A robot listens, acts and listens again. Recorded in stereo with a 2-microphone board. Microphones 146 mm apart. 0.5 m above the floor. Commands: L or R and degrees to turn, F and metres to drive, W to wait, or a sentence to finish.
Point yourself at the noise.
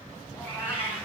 L15
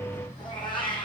L35
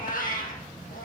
L110
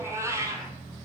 R25
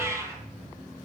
R20
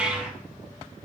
Found it: a cat meowing, straight ahead, 1 to 2 m away.